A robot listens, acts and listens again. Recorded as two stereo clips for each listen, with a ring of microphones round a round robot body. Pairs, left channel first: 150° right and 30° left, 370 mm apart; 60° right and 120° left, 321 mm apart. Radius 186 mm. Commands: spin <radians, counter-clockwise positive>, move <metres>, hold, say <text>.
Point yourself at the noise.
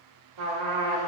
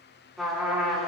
spin 0.52
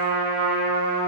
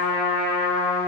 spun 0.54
say Facing the trumpet, 2 to 4 m away.